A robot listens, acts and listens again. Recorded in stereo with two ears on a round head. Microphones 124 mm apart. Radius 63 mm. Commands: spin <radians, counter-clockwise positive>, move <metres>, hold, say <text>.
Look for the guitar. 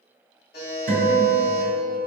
spin -1.57
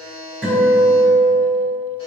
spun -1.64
spin -0.17
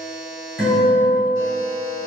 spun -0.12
say Facing the guitar.